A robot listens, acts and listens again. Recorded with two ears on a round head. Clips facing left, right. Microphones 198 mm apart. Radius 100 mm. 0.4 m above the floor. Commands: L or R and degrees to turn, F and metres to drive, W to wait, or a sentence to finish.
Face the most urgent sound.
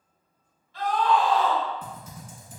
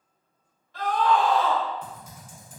R45
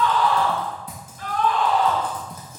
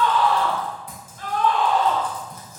R80
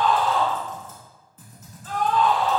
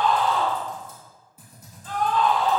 Found it: a scream, straight ahead, 1 to 2 m away.